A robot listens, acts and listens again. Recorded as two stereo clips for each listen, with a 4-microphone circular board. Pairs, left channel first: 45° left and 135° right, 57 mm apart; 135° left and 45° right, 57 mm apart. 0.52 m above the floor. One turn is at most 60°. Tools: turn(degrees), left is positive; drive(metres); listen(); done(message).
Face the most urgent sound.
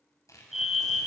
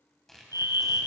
turn(degrees=-50)
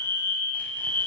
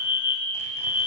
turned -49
done("Found it: a fire alarm, straight ahead, over 4 m away.")